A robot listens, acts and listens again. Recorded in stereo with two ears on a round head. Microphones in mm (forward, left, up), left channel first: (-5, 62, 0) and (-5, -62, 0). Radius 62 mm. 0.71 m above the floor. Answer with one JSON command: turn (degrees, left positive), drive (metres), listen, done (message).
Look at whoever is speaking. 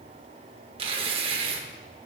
{"listen": true}
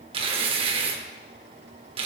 {"listen": true}
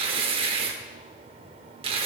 {"done": "I can't make out anyone speaking, only tearing paper."}